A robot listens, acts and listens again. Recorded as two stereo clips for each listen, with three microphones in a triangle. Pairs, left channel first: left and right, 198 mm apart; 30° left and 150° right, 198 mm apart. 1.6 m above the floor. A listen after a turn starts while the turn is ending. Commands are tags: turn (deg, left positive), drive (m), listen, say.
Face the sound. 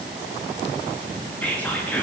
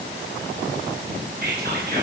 <turn deg="170"/>
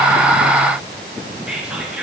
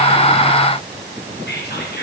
<say>Found it: whispering, straight ahead, 2 to 4 m away.</say>